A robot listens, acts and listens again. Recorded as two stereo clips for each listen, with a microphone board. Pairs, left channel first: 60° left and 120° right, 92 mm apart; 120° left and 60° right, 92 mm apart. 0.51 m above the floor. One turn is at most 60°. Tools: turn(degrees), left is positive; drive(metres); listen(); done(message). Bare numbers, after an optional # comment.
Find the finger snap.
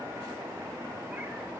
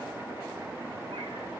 listen()
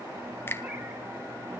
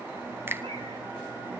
done("Facing the finger snap, 1 to 2 m away.")